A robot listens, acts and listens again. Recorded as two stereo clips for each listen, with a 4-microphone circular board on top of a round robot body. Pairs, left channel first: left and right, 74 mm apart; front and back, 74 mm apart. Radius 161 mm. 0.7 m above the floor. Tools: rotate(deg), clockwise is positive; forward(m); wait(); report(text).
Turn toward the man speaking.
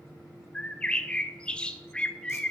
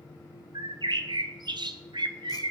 wait()
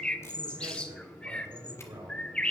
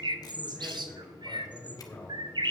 rotate(75)
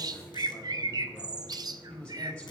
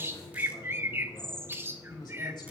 rotate(-10)
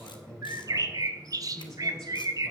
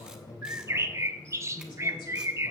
report("Facing the man speaking.")